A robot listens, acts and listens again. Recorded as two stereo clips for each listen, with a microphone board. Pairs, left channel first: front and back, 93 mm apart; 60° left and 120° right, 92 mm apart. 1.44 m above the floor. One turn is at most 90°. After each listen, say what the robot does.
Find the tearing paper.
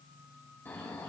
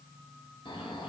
Keep listening.
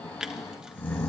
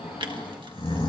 Turn 90° right.
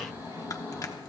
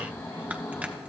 Turn 10° right.
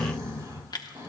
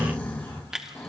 Turn 40° right.
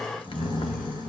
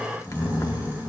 Keep listening.
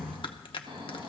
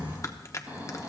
Found it: tearing paper, straight ahead, 1 to 2 m away.